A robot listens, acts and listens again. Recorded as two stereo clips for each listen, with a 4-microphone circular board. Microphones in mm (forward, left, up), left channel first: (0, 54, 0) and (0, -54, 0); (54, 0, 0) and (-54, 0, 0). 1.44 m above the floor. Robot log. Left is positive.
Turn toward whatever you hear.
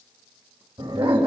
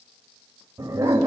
note: The dog barking: 120° right.
cmd yaw -120
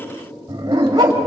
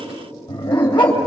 note: The dog barking is now 40° right.
cmd yaw -40
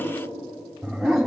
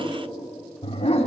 end: Facing the dog barking, over 4 m away.